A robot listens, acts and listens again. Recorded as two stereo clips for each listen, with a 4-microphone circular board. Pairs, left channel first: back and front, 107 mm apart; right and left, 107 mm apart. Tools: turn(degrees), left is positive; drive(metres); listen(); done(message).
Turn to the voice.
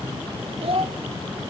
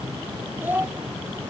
turn(degrees=20)
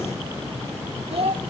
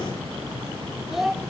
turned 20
done("Facing the child speaking, under 1 m away.")